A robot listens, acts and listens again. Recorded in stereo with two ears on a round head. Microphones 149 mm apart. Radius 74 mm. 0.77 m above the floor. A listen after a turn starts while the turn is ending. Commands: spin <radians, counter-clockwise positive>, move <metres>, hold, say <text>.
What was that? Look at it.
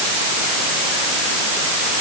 hold
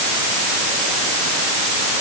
hold
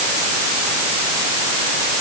say I can't make out anything.